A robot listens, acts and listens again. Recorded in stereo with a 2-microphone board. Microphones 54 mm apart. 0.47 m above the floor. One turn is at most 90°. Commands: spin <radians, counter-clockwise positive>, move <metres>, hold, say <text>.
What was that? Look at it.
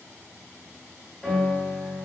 spin 0.35
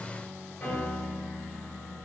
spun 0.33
spin 1.57
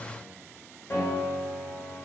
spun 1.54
spin 0.96
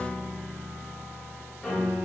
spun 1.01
say Found it: a piano, straight ahead.